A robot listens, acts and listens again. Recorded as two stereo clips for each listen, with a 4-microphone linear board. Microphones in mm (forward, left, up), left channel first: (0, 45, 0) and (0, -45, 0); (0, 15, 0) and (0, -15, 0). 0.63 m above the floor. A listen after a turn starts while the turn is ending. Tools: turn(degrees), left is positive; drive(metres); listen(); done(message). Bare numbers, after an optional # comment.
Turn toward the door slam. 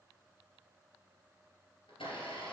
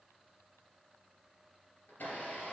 listen()
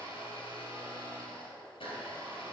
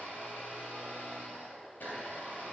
listen()
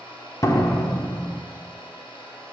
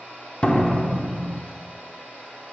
# The door slam: about 35° left or 145° left.
turn(35)
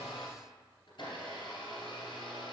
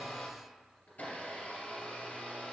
listen()
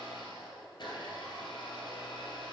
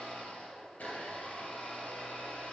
done("I heard a door slam, but can't make it out now. It was about straight ahead or 110° left.")